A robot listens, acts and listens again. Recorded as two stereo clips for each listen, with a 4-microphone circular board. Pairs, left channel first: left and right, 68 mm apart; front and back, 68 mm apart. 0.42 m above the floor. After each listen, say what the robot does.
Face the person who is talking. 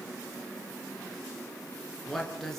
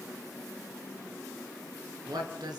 Turn 175° left.
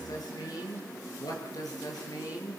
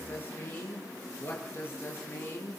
Turn 60° left.
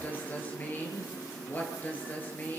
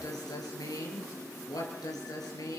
Turn 25° left.
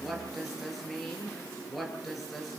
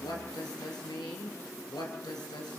Facing the woman speaking, over 4 m away.